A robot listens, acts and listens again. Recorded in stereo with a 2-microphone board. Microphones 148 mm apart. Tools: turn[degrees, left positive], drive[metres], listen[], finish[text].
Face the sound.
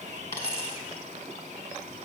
Thought: The dropped coin: about 20° left or 160° left.
Action: turn[20]
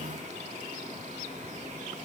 Action: listen[]
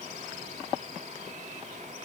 Action: finish[I heard a dropped coin, but can't make it out now. It was about straight ahead or 140° left.]